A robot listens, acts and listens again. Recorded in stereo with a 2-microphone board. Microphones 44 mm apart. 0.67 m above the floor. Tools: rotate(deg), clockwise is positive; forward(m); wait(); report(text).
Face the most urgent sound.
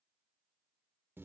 wait()
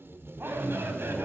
rotate(60)
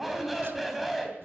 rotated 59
report("Facing the shout.")